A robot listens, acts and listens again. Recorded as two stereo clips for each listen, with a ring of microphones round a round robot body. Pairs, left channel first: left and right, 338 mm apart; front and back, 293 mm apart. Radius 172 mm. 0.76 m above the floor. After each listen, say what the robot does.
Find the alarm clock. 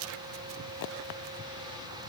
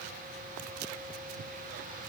Keep listening.
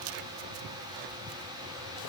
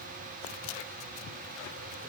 Keep listening.
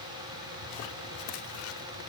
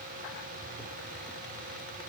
I can't make out an alarm clock.